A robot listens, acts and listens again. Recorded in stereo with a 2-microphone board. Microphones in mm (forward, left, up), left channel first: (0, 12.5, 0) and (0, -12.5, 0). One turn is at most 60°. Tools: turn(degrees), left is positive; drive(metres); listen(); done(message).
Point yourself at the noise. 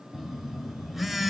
turn(degrees=-30)
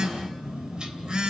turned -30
turn(degrees=-60)
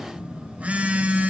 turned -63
turn(degrees=-60)
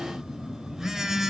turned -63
turn(degrees=-15)
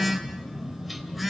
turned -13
done("Facing the phone buzzing, 2 to 4 m away.")